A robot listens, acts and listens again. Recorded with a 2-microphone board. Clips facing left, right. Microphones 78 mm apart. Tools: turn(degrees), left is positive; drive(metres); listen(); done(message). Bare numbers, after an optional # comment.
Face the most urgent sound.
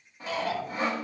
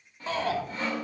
# The shout: about 35° right or 145° right.
turn(-35)
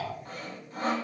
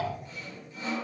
# So it is at 110° right.
turn(-110)
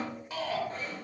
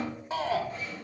# The shout is now 30° right.
turn(-30)
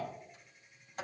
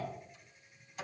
listen()
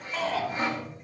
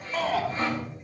done("Facing the shout.")